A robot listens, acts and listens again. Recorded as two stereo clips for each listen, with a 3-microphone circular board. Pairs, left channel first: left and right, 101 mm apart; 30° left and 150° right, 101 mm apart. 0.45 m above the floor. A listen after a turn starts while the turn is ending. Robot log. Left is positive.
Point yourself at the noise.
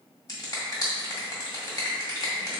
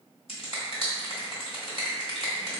note: The finger snap: 40° left.
cmd yaw +40
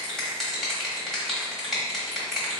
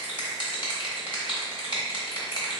end: Found it: a finger snap, straight ahead.